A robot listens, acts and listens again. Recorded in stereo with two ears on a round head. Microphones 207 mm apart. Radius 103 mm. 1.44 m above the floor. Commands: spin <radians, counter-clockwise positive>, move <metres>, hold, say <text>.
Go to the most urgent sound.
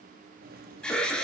spin 0.52
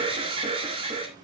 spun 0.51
spin -0.44
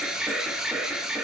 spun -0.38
move 1.0
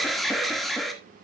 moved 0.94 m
move 1.0
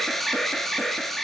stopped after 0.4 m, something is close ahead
say I am next to the alarm.